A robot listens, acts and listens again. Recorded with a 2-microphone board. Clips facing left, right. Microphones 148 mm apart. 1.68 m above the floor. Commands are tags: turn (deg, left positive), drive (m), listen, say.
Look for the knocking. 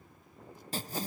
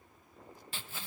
<listen/>
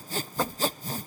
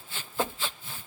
<turn deg="-15"/>
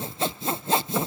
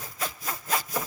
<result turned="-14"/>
<listen/>
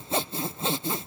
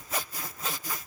<listen/>
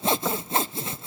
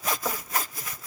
<say>I heard knocking, but can't make it out now. It was about straight ahead or 150° right.</say>